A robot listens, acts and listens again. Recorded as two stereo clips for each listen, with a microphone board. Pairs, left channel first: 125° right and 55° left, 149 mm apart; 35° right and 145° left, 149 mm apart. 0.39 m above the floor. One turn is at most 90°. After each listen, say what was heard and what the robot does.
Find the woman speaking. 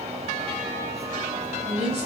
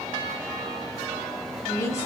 The woman speaking: 30° left. Turn 30° left.
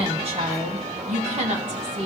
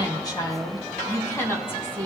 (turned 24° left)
The woman speaking is now 40° left. Turn 40° left.
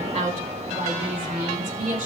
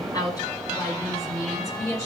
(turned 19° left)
The woman speaking is now 35° left. Turn 35° left.
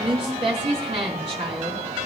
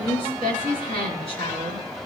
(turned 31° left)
Facing the woman speaking, 2 to 4 m away.